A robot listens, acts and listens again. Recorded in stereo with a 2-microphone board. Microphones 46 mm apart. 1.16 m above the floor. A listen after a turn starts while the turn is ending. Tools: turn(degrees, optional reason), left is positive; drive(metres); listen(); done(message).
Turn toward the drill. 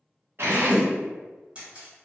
turn(degrees=-55, reason="The drill: about 55° right or 125° right.")
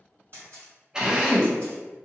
turn(degrees=-20, reason="So it is at 20° right.")
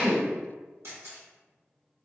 listen()
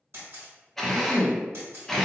done("Facing the drill, under 1 m away.")